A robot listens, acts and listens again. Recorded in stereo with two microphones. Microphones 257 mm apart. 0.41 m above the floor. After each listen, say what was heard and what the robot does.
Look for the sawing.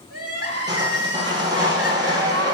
The sawing: about 15° right or 165° right. Turn 15° right.
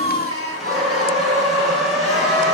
Found it: sawing, straight ahead, 2 to 4 m away.